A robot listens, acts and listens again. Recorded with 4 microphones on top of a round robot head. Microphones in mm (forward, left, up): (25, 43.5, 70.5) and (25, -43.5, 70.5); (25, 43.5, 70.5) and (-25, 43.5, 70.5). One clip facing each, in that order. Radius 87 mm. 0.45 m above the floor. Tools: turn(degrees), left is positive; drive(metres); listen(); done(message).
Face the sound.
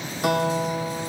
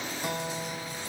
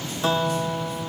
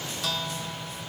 turn(degrees=65)
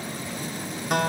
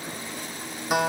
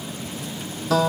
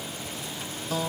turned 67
done("Facing the guitar.")